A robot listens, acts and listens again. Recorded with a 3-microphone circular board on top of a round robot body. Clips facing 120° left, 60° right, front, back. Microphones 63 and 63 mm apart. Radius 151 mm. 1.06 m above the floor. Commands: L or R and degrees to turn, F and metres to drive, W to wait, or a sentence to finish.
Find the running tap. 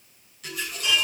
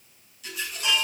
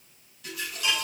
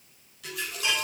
L165
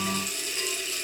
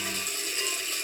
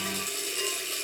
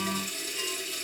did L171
R10
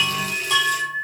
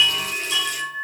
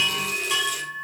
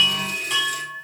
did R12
Facing the running tap, 2 to 4 m away.